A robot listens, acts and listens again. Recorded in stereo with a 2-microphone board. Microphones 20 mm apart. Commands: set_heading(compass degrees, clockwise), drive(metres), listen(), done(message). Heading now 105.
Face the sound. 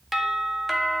set_heading(135)
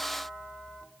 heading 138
listen()
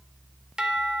set_heading(278)
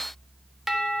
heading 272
done("Found it: a doorbell, straight ahead.")